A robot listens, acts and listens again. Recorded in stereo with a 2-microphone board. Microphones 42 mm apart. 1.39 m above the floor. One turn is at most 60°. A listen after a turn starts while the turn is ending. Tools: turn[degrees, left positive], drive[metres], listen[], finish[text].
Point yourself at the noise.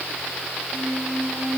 Thought: The squeak: about 20° left or 160° left.
Action: turn[20]
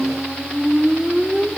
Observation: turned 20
Action: finish[Facing the squeak, 1 to 2 m away.]